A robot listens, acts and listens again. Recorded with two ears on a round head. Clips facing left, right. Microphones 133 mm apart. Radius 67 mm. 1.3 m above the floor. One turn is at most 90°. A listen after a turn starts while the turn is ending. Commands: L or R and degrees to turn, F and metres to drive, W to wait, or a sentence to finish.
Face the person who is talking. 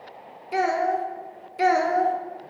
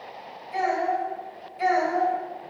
L65
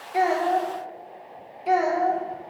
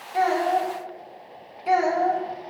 Found it: a child speaking, straight ahead.